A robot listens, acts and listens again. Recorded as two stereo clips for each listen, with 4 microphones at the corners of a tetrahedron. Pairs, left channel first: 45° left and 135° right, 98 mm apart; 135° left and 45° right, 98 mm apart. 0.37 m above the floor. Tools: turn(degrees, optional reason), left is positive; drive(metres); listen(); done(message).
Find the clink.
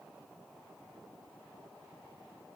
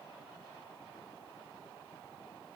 listen()
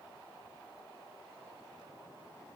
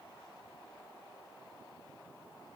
listen()
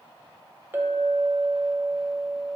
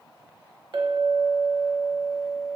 turn(degrees=-70, reason="The clink: 70° right.")
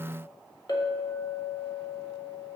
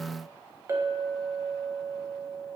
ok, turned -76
done("Facing the clink, under 1 m away.")